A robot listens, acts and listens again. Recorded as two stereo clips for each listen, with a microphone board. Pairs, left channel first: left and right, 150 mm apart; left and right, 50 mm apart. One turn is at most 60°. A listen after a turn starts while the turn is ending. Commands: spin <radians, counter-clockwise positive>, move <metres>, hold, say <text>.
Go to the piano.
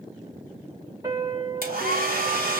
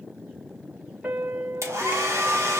spin -0.44
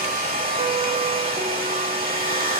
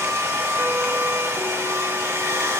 hold
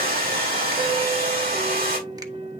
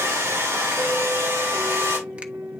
spin -1.05
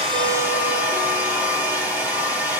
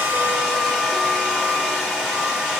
spin -1.05
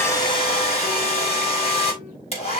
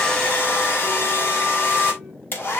spin -0.17
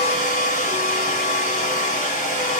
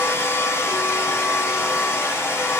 say Facing where the piano came from. I can't hear it now. I did not reach it.